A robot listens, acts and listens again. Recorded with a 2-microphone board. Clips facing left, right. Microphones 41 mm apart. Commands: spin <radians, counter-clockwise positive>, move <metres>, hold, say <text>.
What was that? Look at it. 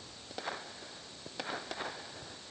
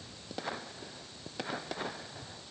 hold
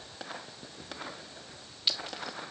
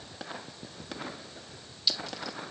spin 0.61
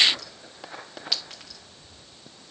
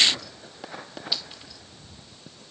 spin 1.83
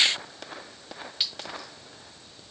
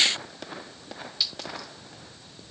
spin 0.79
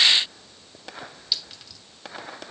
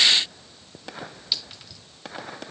say Facing the clink, 1 to 2 m away.